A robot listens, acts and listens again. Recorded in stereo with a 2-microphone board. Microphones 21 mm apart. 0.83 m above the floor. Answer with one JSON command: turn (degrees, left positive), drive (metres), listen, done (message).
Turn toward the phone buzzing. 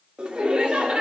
{"listen": true}
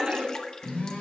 {"turn": 55}
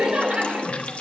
{"listen": true}
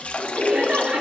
{"listen": true}
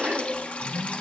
{"done": "Found it: a phone buzzing, straight ahead."}